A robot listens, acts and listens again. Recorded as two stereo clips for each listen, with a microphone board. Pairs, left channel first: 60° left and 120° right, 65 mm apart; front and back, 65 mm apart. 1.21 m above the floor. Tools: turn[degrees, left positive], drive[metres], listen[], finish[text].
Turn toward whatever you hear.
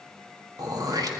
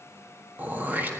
Thought: The throat clearing: 120° right.
Action: turn[-120]
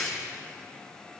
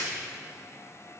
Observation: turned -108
Thought: The throat clearing is now 10° right.
Action: turn[-10]
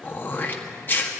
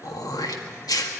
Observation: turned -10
Action: finish[Facing the throat clearing.]